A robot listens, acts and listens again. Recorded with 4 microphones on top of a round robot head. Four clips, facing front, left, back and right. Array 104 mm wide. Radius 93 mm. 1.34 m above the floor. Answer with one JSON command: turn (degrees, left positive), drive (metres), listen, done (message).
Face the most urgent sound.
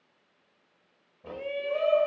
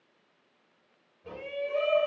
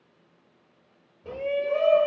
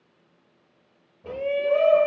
{"turn": -105}
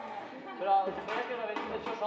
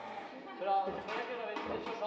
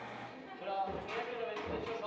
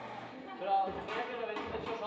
{"turn": 15}
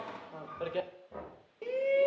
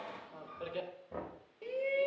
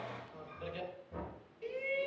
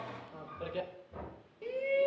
{"done": "Facing the shout."}